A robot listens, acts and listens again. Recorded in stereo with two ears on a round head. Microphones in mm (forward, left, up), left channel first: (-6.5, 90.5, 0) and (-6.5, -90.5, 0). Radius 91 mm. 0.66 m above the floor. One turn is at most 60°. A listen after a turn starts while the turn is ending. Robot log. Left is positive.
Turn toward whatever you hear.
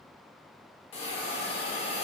note: The hiss: about 30° left or 150° left.
cmd yaw +30
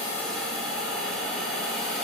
end: Facing the hiss.